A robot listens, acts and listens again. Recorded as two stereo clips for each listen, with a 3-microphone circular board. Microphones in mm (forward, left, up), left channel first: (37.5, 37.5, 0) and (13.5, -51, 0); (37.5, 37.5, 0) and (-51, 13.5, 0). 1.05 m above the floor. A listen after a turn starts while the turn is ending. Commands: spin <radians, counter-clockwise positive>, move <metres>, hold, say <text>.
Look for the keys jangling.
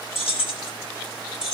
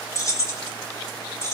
spin 1.31
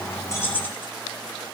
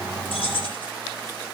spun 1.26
say Facing the keys jangling, 2 to 4 m away.